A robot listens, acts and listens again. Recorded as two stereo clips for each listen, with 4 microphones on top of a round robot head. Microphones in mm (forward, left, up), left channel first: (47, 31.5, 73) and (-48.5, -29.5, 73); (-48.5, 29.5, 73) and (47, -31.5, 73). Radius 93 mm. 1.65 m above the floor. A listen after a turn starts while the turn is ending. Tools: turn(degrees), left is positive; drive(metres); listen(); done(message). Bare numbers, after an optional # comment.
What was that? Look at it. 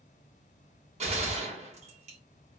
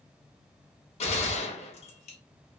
# The gunshot: straight behind.
turn(180)
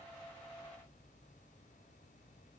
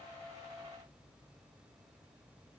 done("I heard a gunshot from this way, but can't make it out now.")